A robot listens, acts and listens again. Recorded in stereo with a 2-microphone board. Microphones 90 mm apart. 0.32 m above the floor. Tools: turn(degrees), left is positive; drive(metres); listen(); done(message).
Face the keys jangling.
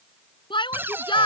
listen()
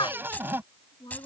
turn(degrees=20)
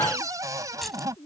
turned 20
done("Found it: keys jangling, straight ahead.")